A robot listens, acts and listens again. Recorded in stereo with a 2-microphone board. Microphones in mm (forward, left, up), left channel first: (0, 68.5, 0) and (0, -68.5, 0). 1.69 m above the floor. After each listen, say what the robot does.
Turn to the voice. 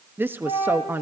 Turn 30° right.
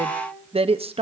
Turn 135° right.
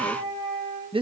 Turn 40° right.
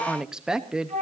Facing the woman speaking, under 1 m away.